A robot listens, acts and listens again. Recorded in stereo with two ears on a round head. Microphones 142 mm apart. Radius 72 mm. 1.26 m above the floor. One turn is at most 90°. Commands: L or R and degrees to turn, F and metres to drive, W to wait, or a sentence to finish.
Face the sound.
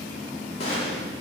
L35
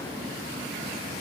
W
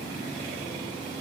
I heard a gunshot, but can't make it out now. It was about straight ahead or 110° left.